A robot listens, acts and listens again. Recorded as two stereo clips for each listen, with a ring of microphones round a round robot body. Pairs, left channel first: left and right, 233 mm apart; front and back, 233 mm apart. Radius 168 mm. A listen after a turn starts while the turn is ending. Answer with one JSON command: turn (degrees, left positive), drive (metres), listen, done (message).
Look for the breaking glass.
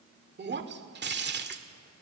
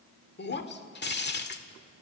{"turn": -45}
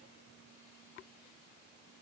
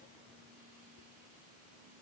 {"done": "I heard breaking glass from this way, but can't make it out now."}